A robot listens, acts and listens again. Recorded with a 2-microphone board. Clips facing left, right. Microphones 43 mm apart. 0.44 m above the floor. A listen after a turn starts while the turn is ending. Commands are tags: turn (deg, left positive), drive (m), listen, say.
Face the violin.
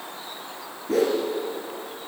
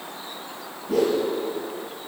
<listen/>
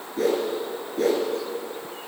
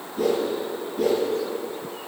<listen/>
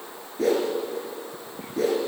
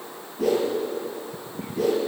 <say>I can't make out a violin to turn to.</say>